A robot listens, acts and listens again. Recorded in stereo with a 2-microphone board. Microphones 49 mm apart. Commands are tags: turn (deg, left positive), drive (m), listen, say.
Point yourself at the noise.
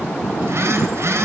<turn deg="-65"/>
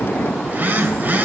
<turn deg="-40"/>
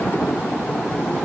<listen/>
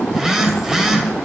<turn deg="-10"/>
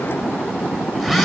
<say>Facing the phone buzzing, 2 to 4 m away.</say>